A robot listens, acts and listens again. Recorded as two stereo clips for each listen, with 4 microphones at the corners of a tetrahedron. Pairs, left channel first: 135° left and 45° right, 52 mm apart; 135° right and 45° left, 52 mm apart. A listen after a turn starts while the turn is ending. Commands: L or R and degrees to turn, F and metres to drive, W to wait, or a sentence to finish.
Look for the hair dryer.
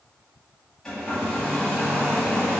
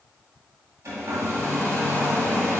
L60
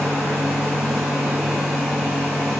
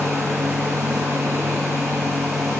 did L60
L35
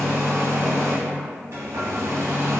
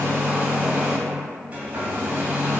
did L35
R15
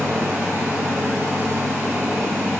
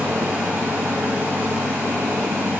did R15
Facing the hair dryer, 1 to 2 m away.